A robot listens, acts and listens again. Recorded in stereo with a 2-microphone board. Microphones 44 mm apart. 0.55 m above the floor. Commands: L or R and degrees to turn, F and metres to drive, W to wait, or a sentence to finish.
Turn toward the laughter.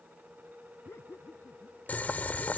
L90
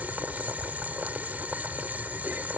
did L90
W
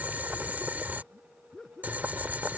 L15
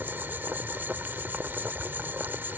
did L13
W
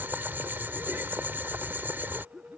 Facing the laughter.